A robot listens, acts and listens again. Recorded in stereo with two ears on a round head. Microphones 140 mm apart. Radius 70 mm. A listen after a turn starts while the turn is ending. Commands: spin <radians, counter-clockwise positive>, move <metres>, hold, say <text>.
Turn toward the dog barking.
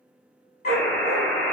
spin 0.96
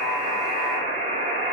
hold
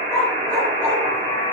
spin 0.17
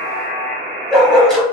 say Found it: a dog barking, straight ahead, 1 to 2 m away.